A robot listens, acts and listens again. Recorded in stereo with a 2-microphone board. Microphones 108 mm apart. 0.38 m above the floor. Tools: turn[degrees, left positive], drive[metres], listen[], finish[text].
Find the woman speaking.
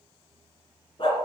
Action: listen[]
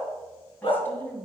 Thought: The woman speaking: about 20° left or 160° left.
Action: turn[20]
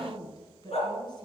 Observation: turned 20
Thought: So it is at 135° left.
Action: turn[135]
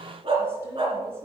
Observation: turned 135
Action: listen[]
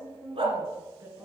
Thought: The woman speaking is now 25° right.
Action: turn[-25]
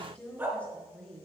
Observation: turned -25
Thought: The woman speaking is now 10° left.
Action: turn[10]
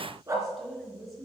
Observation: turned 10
Action: finish[Found it: a woman speaking, straight ahead, over 4 m away.]